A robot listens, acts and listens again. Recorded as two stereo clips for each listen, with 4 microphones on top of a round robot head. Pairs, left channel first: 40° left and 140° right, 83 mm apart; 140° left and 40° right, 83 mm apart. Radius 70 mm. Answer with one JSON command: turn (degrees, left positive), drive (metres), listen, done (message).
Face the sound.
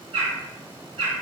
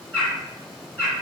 {"turn": -145}
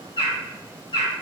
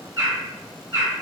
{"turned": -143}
{"done": "Found it: a bird, straight ahead."}